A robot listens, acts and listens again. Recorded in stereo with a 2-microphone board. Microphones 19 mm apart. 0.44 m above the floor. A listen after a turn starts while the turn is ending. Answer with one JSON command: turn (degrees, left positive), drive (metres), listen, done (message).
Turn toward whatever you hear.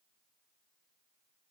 {"listen": true}
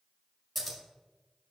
{"turn": 30}
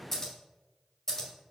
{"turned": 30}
{"turn": 150}
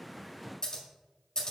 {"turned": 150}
{"turn": 40}
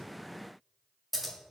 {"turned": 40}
{"done": "Facing the scissors."}